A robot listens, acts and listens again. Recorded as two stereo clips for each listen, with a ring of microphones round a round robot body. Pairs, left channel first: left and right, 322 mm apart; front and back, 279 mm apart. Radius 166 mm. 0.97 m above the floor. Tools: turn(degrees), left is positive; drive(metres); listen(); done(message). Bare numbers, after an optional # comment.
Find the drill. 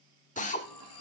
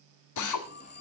# The drill: 20° left.
turn(20)
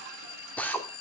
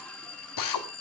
done("Found it: a drill, straight ahead, 1 to 2 m away.")